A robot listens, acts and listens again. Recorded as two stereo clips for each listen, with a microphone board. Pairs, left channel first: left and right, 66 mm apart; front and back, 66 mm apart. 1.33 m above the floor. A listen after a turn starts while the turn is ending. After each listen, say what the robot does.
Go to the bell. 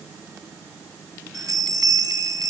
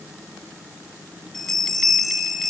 Turn 85° right.
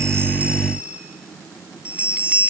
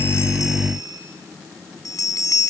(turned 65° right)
Turn 20° right.
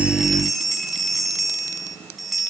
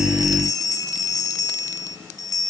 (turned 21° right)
Drive 1.0 m forward.
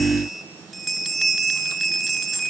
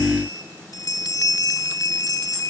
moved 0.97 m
Drive 1.0 m forward.
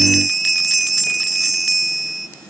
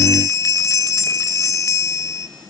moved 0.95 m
Drive 1.0 m forward.
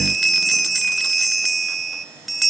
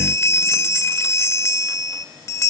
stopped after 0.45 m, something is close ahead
I am next to the bell.